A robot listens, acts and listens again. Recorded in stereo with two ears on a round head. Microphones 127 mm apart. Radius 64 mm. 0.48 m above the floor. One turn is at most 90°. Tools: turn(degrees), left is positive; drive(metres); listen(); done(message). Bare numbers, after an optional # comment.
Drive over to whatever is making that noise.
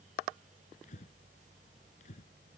# The breathing: about 50° left or 130° left.
turn(50)
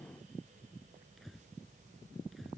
drive(1.0)
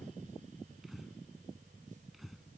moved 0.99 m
drive(1.0)
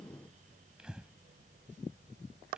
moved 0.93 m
drive(1.0)
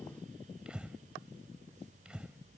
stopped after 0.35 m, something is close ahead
# The breathing is now 10° right.
turn(-10)
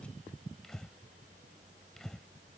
done("Arrived at the breathing, straight ahead.")